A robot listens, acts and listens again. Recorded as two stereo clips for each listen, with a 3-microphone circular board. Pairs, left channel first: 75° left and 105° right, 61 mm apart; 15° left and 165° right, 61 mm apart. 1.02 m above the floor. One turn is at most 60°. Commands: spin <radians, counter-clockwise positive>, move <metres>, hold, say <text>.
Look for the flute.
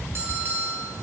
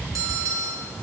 hold
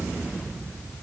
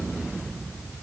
hold
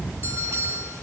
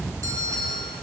say I can't make out a flute to turn to.